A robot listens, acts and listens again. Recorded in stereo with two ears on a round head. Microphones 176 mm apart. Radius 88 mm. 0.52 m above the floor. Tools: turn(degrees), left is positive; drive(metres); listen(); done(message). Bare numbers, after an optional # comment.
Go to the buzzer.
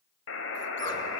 # The buzzer: about 70° left or 110° left.
turn(70)
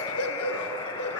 # So it is at 25° left.
turn(25)
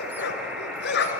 drive(1.0)
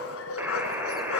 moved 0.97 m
# The buzzer is now 10° right.
turn(-10)
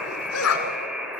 drive(1.0)
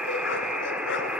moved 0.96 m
drive(1.0)
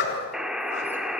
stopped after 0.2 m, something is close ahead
done("I am next to the buzzer.")